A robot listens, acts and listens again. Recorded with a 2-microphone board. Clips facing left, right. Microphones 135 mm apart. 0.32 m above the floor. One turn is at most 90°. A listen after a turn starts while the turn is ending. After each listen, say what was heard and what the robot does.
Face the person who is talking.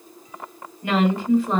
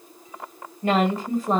The woman speaking: about 40° right or 140° right. Turn 40° right.
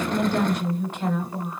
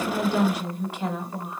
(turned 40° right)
So it is at 10° right. Turn 10° right.
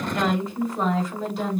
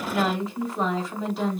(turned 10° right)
Found it: a woman speaking, straight ahead, 1 to 2 m away.